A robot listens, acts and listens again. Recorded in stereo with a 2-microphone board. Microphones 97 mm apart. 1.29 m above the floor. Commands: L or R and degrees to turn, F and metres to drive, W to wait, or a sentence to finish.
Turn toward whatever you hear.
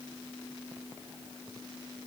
W
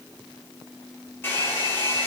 L20
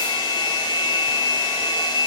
L140
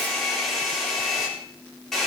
Found it: a hair dryer, straight ahead, over 4 m away.